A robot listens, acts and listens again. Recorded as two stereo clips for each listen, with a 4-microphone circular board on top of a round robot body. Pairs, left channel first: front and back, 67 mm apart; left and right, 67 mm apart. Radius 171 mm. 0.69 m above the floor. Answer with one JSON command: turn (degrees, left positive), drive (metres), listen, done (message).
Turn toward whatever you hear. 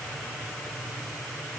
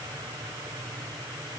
{"listen": true}
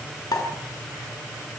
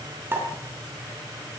{"turn": -30}
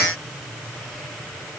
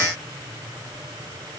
{"done": "I heard a pop from this way, but can't make it out now."}